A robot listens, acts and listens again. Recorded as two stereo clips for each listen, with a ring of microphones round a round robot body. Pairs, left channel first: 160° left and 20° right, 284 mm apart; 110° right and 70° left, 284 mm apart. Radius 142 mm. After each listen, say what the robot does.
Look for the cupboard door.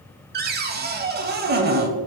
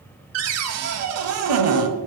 Turn 35° left.
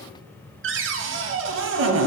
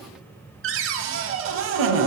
Turn 25° left.
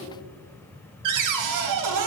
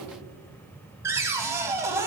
Turn 15° right.
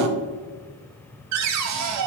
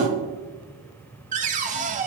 Facing the cupboard door, under 1 m away.